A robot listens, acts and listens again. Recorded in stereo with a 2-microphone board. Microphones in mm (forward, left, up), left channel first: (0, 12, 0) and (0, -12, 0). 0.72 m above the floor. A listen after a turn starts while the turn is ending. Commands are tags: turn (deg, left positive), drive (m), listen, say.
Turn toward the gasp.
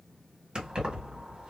<listen/>
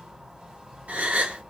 <turn deg="-65"/>
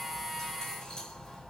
<listen/>
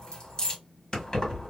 <say>I heard a gasp, but can't make it out now. It was about straight ahead or 50° right.</say>